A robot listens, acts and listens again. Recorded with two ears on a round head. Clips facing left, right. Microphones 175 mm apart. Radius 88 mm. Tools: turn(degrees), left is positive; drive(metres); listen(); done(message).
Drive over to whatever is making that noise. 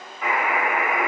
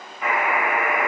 turn(degrees=30)
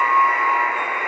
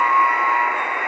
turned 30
turn(degrees=-30)
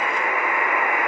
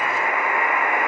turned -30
turn(degrees=-25)
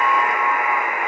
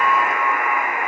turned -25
drive(metres=1.0)
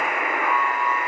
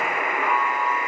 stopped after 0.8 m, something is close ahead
done("Arrived at the buzzer, straight ahead.")